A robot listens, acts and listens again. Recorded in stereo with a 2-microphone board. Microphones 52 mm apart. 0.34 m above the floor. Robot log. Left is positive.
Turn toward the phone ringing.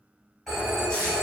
cmd yaw +30
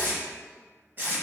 cmd idle
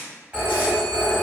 note: So it is at 30° right.
cmd yaw -30
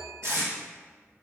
cmd idle
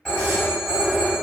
end: Facing the phone ringing.